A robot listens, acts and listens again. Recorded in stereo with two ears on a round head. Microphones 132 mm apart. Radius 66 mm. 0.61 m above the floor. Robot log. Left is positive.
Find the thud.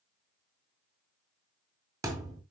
note: The thud: about 20° right or 160° right.
cmd yaw -20
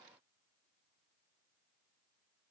cmd idle
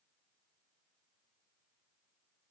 end: I heard a thud, but can't make it out now. It was about straight ahead or 140° right.